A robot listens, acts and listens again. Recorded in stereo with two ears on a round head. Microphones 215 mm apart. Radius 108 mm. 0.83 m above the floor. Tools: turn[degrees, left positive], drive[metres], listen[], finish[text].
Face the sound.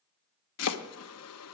Thought: The chopping: about 70° left or 110° left.
Action: turn[70]
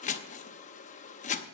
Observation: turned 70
Thought: So it is at 30° left.
Action: turn[30]
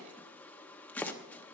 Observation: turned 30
Action: finish[Facing the chopping, under 1 m away.]